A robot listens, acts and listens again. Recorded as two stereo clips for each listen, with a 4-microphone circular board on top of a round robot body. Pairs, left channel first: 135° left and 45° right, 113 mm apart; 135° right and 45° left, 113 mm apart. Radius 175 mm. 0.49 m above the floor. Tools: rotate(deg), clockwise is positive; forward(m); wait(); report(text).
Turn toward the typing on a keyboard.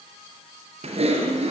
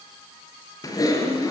rotate(75)
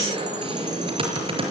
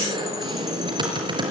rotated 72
report("Facing the typing on a keyboard.")